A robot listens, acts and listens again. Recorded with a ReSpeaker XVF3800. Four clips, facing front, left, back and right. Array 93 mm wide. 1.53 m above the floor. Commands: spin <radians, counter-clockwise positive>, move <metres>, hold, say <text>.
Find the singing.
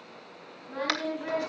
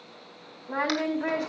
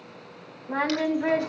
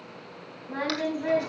spin 2.53
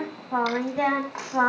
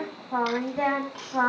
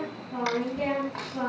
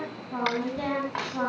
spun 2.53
spin 0.52
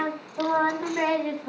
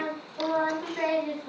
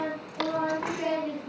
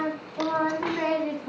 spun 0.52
spin -0.35
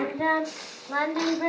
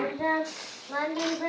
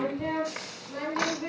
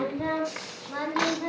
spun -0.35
say Found it: singing, straight ahead.